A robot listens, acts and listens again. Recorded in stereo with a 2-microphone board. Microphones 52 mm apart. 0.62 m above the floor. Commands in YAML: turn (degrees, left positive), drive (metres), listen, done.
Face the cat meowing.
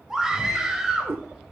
turn: -50
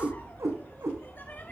turn: -75
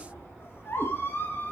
listen: true
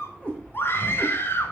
turn: 25
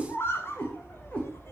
turn: 25
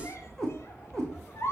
turn: 10
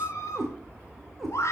done: "Facing the cat meowing."